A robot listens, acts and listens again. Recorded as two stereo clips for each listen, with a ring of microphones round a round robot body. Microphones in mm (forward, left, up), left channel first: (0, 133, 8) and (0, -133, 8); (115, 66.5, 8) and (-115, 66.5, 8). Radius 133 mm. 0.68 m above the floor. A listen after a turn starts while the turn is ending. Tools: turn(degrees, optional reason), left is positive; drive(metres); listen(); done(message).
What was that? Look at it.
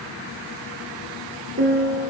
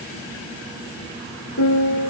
turn(degrees=-35, reason="The piano: 35° right.")
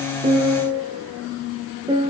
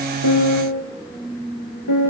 turn(degrees=-15, reason="The piano is now 15° right.")
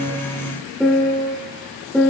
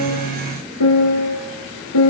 done("Facing the piano, over 4 m away.")